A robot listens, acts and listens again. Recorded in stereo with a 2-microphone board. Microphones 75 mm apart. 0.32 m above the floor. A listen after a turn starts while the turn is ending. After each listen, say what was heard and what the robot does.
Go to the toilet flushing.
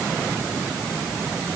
Keep listening.
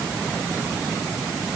Keep listening.
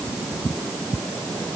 I can't make out a toilet flushing to turn to.